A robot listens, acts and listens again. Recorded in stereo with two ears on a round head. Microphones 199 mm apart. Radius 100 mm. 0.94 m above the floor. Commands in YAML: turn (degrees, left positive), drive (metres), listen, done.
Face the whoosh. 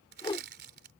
turn: 20
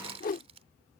turn: 135
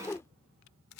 turn: 15
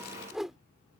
done: "Found it: a whoosh, straight ahead."